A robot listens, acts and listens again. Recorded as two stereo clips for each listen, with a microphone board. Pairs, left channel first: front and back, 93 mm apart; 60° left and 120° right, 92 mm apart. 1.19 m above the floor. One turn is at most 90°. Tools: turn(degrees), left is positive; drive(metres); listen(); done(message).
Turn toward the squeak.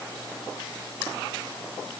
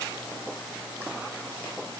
listen()
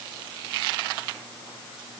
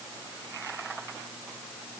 listen()
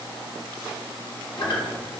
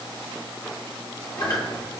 turn(degrees=25)
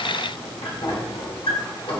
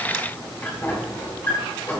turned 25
done("Facing the squeak, 1 to 2 m away.")